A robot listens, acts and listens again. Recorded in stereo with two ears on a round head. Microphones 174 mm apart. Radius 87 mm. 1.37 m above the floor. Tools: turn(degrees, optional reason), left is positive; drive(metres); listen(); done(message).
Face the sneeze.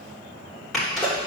turn(degrees=30)
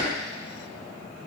listen()
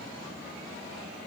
done("I heard a sneeze, but can't make it out now. It was about 25° right or 145° left.")